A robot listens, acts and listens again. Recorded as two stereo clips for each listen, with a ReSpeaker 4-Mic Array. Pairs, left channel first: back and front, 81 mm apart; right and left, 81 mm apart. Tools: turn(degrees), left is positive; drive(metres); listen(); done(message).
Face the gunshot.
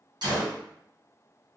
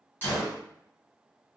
turn(degrees=-25)
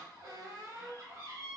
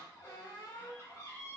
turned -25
done("I heard a gunshot from this way, but can't make it out now.")